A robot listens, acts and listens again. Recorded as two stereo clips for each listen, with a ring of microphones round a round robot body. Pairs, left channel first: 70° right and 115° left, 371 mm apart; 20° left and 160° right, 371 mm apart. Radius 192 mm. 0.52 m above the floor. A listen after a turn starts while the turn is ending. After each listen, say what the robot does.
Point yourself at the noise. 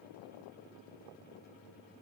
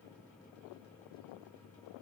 Keep listening.
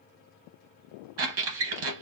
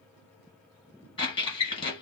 Turn 100° left.
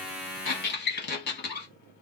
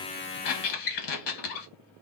Found it: a squeak, straight ahead.